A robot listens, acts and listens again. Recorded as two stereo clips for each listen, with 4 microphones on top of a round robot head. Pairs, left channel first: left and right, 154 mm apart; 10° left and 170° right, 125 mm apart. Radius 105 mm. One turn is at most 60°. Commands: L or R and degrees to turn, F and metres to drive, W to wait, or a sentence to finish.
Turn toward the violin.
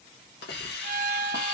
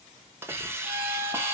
R60
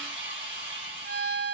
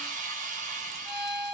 R60
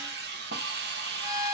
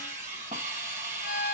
R20
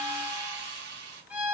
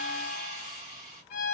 R10
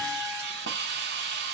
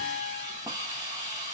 W
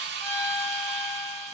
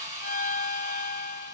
Facing the violin, under 1 m away.